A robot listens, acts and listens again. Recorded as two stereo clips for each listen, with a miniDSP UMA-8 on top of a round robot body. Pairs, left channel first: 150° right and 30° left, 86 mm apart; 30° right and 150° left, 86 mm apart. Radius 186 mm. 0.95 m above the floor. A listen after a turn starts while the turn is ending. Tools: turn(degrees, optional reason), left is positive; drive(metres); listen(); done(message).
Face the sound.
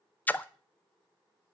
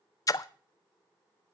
turn(degrees=-80, reason="The splash: 80° right.")
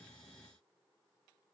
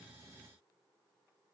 done("Facing where the splash came from. I can't hear it now.")